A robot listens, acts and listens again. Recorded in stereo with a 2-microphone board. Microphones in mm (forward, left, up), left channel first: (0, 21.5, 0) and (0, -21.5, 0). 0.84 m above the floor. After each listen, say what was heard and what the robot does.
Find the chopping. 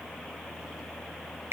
Keep listening.
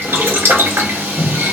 Keep listening.
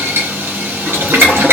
I can't make out chopping to turn to.